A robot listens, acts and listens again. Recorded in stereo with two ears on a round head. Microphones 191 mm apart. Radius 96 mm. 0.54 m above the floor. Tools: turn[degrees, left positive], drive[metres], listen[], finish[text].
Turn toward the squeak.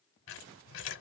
Thought: The squeak: about 60° left or 120° left.
Action: turn[60]
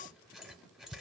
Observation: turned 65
Action: finish[Found it: a squeak, straight ahead.]